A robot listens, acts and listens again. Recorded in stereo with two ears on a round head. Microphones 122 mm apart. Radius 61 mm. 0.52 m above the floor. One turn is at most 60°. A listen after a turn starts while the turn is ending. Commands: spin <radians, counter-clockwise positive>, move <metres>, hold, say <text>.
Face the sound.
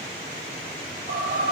spin -1.05
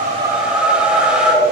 spin -0.17
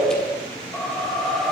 say Found it: a whoosh, straight ahead, 2 to 4 m away.